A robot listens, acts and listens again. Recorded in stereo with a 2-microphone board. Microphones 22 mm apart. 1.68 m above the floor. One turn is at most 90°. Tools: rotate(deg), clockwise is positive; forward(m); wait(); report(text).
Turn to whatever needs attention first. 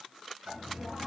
wait()
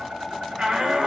rotate(45)
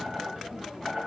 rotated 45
wait()
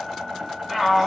report("Facing the shout, 1 to 2 m away.")